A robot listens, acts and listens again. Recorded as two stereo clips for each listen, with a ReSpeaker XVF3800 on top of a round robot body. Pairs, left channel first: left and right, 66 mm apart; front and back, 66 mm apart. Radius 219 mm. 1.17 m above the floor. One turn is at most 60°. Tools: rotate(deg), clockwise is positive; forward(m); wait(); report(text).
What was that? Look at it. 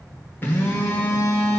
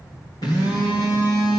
rotate(-35)
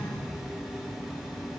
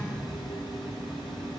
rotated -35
report("Facing the phone buzzing, 1 to 2 m away.")